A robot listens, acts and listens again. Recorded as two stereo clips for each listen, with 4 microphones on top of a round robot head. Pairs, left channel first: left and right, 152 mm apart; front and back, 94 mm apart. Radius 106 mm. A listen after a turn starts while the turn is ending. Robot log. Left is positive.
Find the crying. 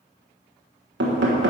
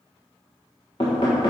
cmd idle
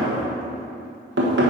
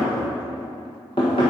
cmd idle
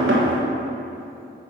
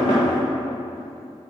end: I can't make out crying to turn to.